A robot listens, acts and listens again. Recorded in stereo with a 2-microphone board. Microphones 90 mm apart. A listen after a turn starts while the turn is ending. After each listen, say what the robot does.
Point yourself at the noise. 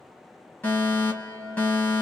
Turn 20° left.
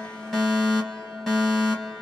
Found it: a fire alarm, straight ahead.